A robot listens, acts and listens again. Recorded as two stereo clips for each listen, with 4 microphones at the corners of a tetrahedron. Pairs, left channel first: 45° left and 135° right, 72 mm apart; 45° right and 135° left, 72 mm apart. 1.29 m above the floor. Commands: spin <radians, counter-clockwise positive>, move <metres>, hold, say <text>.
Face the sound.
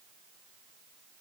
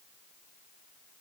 hold
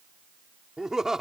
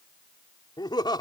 spin -0.87
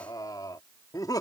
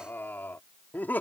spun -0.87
spin 0.35
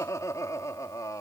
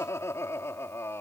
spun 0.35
spin 0.17
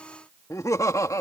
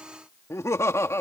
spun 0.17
say Found it: laughter, straight ahead.